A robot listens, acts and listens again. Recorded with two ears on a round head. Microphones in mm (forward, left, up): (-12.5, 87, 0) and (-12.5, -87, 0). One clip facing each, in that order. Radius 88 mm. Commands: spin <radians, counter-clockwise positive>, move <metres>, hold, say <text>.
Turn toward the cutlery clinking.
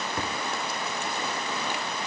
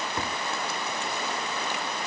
hold
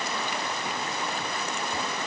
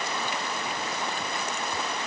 hold
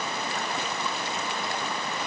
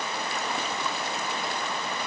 say I can't make out cutlery clinking to turn to.